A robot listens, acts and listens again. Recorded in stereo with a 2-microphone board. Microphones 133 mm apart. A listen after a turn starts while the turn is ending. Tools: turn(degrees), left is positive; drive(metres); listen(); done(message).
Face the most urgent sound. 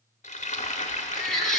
turn(degrees=30)
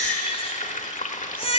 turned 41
turn(degrees=135)
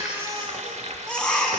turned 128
done("Facing the baby crying.")